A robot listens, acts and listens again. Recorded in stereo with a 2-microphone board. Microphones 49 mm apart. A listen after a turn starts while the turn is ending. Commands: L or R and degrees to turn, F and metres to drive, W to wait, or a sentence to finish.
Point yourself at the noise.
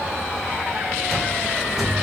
L30
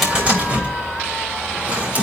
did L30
R25
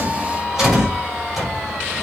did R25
Facing the cupboard door.